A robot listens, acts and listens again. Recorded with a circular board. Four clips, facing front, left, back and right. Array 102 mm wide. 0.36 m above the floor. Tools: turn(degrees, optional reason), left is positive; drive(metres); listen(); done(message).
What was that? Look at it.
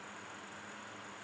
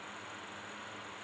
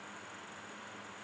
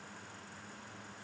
listen()
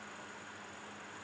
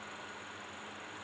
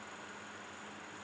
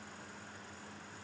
listen()
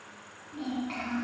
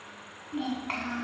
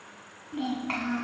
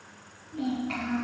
turn(degrees=135, reason="The child speaking: 135° left.")
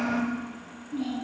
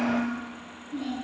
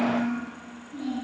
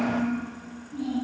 turn(degrees=35, reason="The child speaking is now 35° left.")
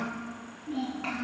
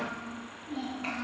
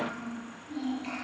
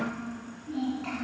turn(degrees=15, reason="The child speaking is now 15° left.")
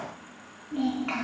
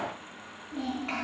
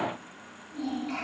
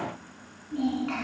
done("Facing the child speaking.")